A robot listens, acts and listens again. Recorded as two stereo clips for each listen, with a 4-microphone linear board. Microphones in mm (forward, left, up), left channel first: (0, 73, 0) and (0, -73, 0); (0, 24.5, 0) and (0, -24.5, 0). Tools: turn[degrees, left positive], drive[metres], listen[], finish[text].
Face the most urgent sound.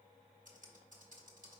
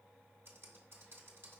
Action: listen[]
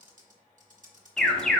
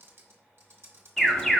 Action: turn[30]
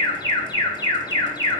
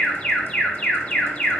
Thought: So it is at 150° left.
Action: turn[150]
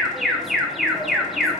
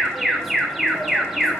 Action: finish[Facing the alarm.]